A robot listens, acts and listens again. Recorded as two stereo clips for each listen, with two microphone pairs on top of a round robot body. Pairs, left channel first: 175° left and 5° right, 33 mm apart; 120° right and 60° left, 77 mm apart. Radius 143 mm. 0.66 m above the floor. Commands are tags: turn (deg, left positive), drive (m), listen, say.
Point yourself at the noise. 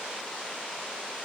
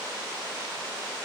<listen/>
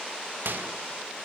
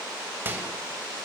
<say>Facing the microwave.</say>